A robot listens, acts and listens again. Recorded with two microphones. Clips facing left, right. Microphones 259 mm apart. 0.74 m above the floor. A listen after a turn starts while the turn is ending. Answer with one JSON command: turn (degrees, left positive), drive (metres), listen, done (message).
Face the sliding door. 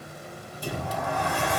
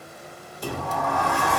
{"turn": -75}
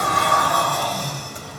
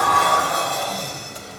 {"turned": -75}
{"turn": -25}
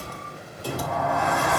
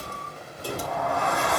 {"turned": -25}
{"done": "Facing the sliding door."}